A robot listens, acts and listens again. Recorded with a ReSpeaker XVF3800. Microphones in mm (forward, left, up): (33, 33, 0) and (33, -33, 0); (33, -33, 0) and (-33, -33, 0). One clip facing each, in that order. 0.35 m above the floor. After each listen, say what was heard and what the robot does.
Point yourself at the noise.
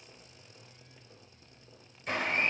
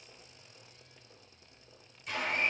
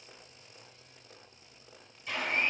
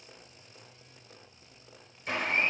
The blender: 140° left. Turn 140° left.
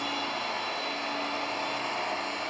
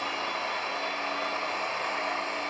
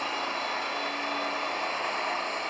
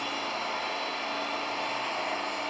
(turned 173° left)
The blender is now 35° right. Turn 35° right.
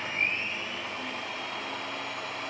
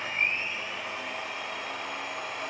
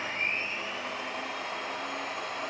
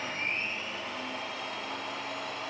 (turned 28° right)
Found it: a blender, straight ahead, 2 to 4 m away.